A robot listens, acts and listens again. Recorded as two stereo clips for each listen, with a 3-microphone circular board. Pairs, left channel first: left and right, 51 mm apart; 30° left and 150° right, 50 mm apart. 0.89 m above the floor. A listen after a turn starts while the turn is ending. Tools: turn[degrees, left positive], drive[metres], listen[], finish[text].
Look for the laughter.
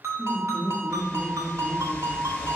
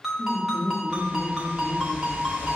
Thought: The laughter: 175° left.
Action: turn[175]
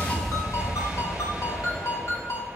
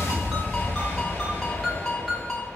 Action: listen[]
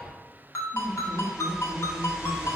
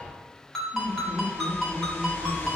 Thought: The laughter is now 25° right.
Action: turn[-25]
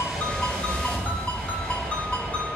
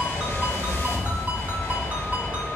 Action: listen[]
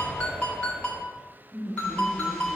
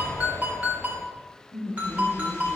Thought: The laughter is now 10° left.
Action: turn[10]
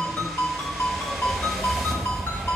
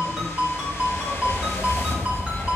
Action: listen[]
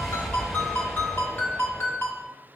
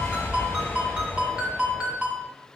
Action: listen[]
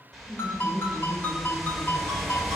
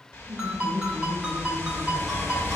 Action: finish[Facing the laughter.]